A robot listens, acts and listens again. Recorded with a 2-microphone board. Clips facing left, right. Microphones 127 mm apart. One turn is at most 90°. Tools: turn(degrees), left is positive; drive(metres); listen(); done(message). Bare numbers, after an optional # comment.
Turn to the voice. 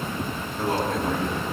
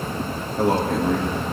# The man speaking: about 70° right or 110° right.
turn(-70)
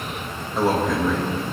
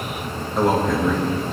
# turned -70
done("Facing the man speaking.")